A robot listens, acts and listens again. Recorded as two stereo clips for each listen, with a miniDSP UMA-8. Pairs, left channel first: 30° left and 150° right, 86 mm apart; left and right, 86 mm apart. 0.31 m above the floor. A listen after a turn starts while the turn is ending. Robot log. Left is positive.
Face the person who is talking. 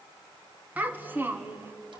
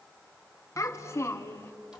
note: The child speaking: 150° left.
cmd yaw +150
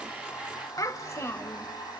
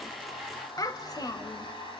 note: The child speaking is now 85° left.
cmd yaw +85
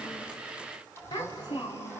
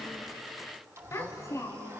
note: The child speaking is now 45° left.
cmd yaw +45
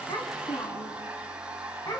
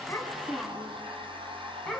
end: Found it: a child speaking, straight ahead.